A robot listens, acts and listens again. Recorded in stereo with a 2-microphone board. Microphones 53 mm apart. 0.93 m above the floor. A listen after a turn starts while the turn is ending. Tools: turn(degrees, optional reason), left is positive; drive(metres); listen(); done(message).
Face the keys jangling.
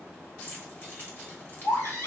turn(degrees=40, reason="The keys jangling: about 40° left or 140° left.")
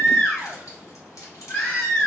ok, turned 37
turn(degrees=100, reason="So it is at 100° left.")
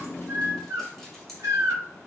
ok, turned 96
listen()
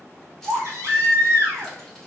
listen()
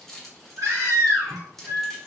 done("Facing the keys jangling, 1 to 2 m away.")